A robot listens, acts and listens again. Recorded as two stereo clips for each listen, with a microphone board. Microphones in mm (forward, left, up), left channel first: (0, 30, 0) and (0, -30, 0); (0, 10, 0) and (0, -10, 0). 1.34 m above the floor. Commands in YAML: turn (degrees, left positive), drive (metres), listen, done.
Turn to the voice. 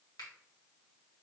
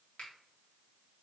listen: true
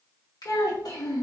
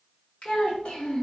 turn: 90
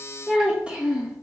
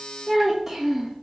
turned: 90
turn: -20
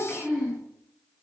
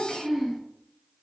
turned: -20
turn: -15
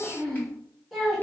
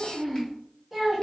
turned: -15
done: "Facing the child speaking."